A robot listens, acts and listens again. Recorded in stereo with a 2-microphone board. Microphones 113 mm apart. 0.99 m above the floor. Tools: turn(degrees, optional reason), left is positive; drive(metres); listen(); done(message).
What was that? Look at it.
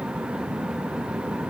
listen()
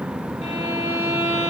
turn(degrees=75, reason="The violin: about 75° left or 105° left.")
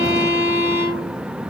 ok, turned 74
turn(degrees=35, reason="So it is at 35° left.")
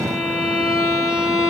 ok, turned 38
done("Facing the violin, 2 to 4 m away.")